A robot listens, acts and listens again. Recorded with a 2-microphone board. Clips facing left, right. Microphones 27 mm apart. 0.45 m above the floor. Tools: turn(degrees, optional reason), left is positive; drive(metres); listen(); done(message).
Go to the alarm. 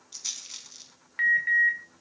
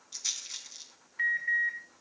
turn(degrees=60, reason="The alarm: about 60° left or 120° left.")
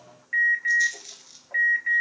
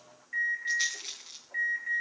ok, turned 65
turn(degrees=40, reason="So it is at 40° left.")
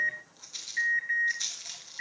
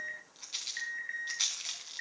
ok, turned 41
drive(metres=1.0)
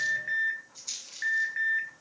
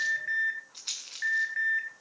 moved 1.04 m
drive(metres=1.0)
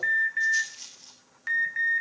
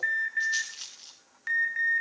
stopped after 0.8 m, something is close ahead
done("Arrived at the alarm, straight ahead.")